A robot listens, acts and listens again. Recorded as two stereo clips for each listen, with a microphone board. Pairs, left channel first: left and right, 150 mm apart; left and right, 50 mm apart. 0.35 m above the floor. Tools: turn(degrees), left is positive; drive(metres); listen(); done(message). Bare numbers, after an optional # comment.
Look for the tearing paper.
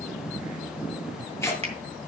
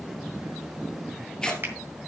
# The tearing paper: about 20° left or 160° left.
turn(20)
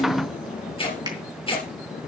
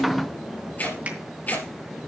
# So it is at 145° left.
turn(145)
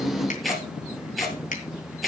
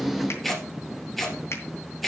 done("Facing the tearing paper.")